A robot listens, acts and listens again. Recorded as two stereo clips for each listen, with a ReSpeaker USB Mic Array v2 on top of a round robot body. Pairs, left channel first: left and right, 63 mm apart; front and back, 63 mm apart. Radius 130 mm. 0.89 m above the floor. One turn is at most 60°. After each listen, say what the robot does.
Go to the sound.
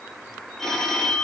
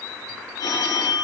Drive 1.0 m forward.
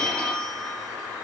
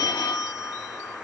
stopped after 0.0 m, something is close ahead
Turn 10° left.
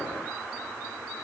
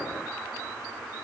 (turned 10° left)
Keep listening.
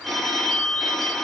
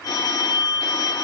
Something is in my way. I am facing the phone ringing but have not reached it.